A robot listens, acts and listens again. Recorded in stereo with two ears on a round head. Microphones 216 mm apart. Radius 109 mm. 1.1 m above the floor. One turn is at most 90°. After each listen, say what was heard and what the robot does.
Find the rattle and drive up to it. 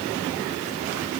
Keep listening.
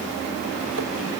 Keep listening.
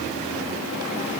I can't make out a rattle to turn to.